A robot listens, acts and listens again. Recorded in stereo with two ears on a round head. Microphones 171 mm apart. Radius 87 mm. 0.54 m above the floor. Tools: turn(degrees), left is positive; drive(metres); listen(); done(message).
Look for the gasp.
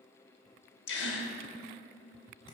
turn(degrees=65)
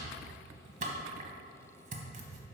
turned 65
listen()
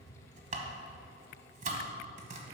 done("I heard a gasp, but can't make it out now. It was about straight ahead or 50° left.")